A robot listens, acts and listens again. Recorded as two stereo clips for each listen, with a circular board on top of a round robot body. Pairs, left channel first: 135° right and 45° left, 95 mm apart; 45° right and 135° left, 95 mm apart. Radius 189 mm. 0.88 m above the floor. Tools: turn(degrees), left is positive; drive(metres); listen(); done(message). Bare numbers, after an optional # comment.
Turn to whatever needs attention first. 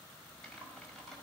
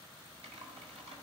listen()
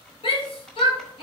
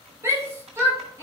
# The shout: 165° right.
turn(-165)
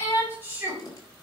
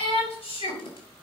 # The shout is now 20° right.
turn(-20)
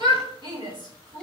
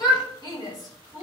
done("Found it: a shout, straight ahead, over 4 m away.")